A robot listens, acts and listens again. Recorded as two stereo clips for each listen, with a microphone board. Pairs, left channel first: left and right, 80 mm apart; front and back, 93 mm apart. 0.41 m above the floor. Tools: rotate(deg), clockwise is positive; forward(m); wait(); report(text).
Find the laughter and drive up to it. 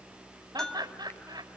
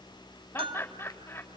rotate(65)
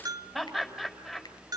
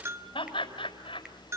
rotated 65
forward(1.0)
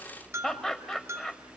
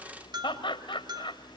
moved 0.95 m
forward(1.0)
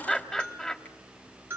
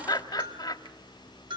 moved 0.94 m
rotate(-10)
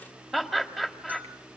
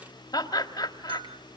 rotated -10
forward(1.0)
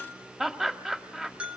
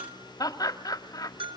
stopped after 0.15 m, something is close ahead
report("I am next to the laughter.")